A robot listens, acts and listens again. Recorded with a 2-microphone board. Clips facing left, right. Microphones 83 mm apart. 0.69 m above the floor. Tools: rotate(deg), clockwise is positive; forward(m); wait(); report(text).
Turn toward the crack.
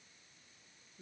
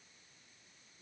wait()
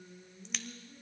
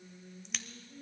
rotate(-30)
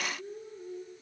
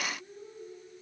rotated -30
wait()
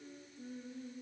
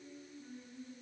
report("I heard a crack, but can't make it out now. It was about 30° right or 150° left.")